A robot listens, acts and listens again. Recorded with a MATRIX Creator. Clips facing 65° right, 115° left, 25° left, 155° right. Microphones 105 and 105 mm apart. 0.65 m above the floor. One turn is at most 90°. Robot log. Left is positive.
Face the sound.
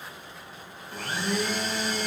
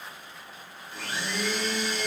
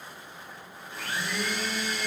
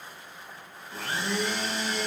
note: The blender: 105° right.
cmd yaw -90
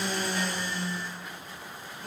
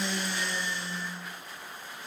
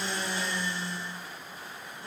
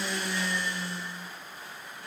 note: The blender is now 40° right.
cmd yaw -40
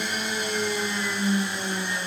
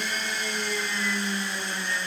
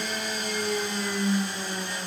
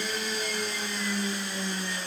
end: Facing the blender, 2 to 4 m away.